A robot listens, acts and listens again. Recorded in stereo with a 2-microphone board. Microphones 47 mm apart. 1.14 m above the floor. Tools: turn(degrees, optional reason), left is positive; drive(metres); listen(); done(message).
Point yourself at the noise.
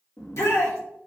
turn(degrees=70, reason="The shout: about 70° left or 110° left.")
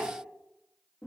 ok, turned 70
listen()
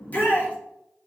turn(degrees=35, reason="So it is at 35° left.")
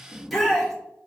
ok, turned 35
done("Found it: a shout, straight ahead.")